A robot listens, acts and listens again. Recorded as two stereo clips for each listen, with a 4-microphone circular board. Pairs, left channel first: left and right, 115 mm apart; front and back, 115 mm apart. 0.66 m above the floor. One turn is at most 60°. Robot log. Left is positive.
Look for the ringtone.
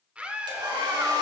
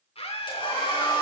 cmd idle
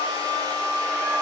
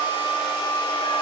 cmd idle
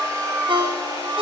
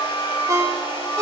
note: The ringtone: 125° right.
cmd yaw -60
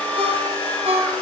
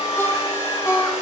note: The ringtone is now 65° right.
cmd yaw -60
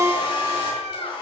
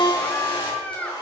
note: The ringtone is now 35° right.
cmd yaw -35
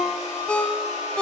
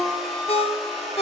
note: The ringtone is now 10° left.
cmd yaw +10
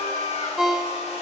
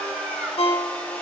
end: Facing the ringtone.